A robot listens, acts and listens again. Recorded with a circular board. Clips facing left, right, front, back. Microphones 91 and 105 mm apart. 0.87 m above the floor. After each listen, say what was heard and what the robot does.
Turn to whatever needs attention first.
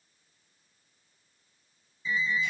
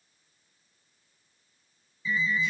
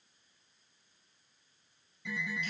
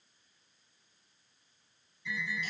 The alarm: 25° left. Turn 25° left.
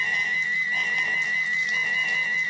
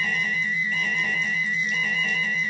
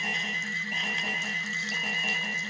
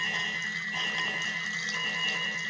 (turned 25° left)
The alarm is now 10° left. Turn 10° left.
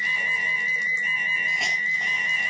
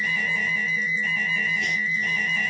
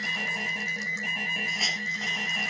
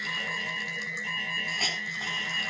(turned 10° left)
Found it: an alarm, straight ahead.